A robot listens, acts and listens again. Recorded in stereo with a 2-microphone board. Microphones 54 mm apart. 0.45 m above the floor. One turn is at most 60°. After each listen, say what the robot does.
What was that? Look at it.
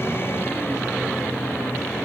Keep listening.
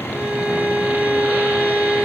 Turn 20° right.
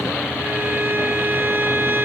Turn 60° right.
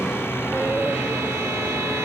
Turn 60° right.
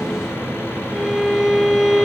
Turn 10° right.
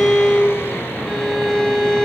Facing the violin.